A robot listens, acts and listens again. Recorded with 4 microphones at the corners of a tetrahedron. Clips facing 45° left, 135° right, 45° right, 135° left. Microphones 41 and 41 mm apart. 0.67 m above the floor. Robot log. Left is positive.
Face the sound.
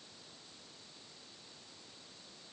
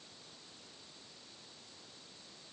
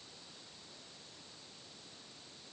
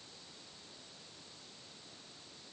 cmd idle
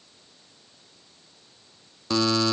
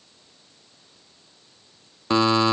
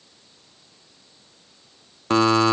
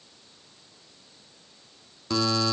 note: The buzzer: 75° right.
cmd yaw -75
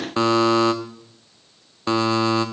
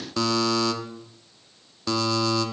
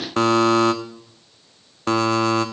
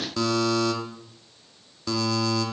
note: The buzzer is now 10° right.
cmd yaw -10
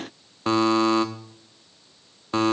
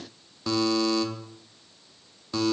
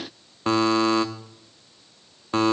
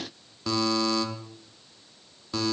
end: Facing the buzzer, under 1 m away.